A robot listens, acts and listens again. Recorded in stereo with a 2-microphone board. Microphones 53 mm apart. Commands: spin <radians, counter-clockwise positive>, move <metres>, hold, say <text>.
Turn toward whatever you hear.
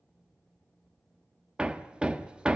spin -0.35
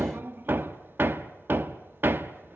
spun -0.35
spin -2.44
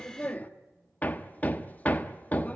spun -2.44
spin 0.52
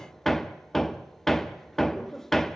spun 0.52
say Facing the hammering.